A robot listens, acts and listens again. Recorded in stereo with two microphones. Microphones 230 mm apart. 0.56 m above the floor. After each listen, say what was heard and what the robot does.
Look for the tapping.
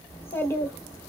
Keep listening.
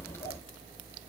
Keep listening.
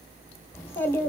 I can't make out tapping to turn to.